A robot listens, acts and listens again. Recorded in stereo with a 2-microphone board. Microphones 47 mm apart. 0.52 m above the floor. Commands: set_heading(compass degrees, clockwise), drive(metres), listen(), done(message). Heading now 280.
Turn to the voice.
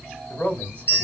set_heading(255)
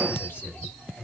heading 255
set_heading(130)
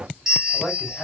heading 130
set_heading(110)
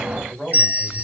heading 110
done("Facing the man speaking.")